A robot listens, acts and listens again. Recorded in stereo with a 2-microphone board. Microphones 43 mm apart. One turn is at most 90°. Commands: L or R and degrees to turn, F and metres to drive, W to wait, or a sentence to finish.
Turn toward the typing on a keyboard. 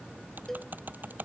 R45
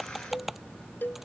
Facing the typing on a keyboard.